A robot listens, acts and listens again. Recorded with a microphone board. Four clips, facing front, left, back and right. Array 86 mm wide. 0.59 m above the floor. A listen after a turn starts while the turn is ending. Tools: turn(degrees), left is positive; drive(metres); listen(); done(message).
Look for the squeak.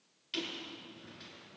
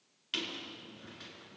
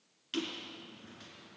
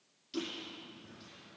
turn(degrees=110)
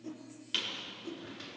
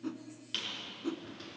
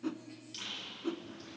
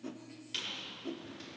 turn(degrees=25)
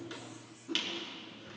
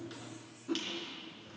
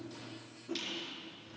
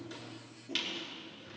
turn(degrees=-20)
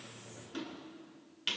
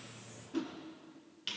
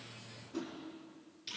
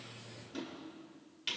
done("Found it: a squeak, straight ahead.")